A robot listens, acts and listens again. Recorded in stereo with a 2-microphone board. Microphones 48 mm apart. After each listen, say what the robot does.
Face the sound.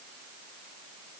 Keep listening.
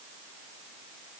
Keep listening.
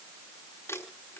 Turn 90° left.
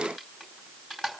Found it: crumpling, straight ahead.